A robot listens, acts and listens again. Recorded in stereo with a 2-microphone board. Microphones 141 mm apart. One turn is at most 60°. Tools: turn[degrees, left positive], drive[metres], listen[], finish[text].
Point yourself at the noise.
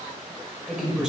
Action: turn[-30]
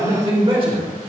Thought: So it is at 140° right.
Action: turn[-60]
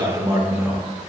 Thought: The man speaking is now 15° right.
Action: turn[-15]
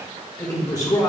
Thought: The man speaking is now 30° left.
Action: turn[30]
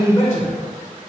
Thought: The man speaking is now 20° left.
Action: turn[20]
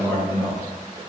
Thought: The man speaking is now 15° left.
Action: turn[15]
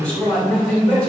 Action: finish[Found it: a man speaking, straight ahead.]